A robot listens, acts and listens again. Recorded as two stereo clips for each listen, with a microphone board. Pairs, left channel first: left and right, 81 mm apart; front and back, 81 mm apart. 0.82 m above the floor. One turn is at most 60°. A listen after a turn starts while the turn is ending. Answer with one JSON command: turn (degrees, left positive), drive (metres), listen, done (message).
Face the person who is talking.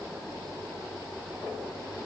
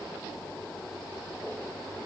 {"listen": true}
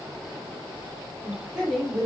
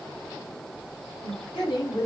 {"turn": -10}
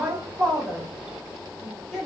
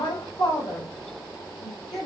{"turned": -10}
{"done": "Facing the woman speaking, 2 to 4 m away."}